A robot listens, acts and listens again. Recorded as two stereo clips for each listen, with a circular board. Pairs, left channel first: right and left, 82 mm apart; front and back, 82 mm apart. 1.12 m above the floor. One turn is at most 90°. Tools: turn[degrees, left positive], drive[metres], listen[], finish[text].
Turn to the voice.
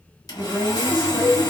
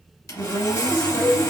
Thought: The woman speaking: 10° left.
Action: turn[10]
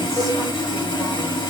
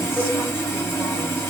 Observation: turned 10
Action: listen[]
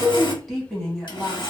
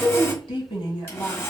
Action: finish[Found it: a woman speaking, straight ahead.]